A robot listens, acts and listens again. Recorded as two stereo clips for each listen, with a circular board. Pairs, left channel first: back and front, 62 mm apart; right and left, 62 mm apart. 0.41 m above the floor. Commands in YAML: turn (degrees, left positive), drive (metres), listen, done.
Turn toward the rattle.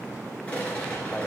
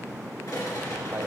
turn: -110
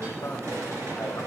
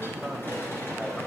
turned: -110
listen: true
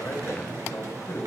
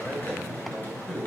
listen: true
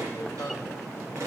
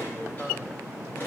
turn: -35
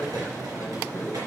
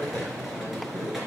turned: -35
listen: true
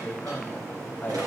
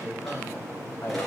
listen: true
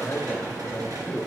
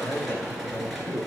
done: "I heard a rattle from this way, but can't make it out now."